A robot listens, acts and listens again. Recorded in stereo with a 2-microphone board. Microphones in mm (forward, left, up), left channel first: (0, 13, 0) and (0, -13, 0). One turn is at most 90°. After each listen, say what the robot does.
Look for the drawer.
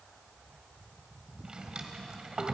Turn 35° right.
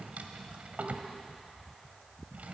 Turn 90° right.
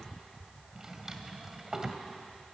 Turn 20° right.
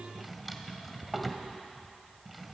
Found it: a drawer, straight ahead.